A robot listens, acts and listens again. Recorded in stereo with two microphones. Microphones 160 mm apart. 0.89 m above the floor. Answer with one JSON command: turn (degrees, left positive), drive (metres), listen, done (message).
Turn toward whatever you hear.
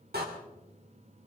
{"turn": -90}
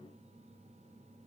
{"done": "I heard a door slam from this way, but can't make it out now."}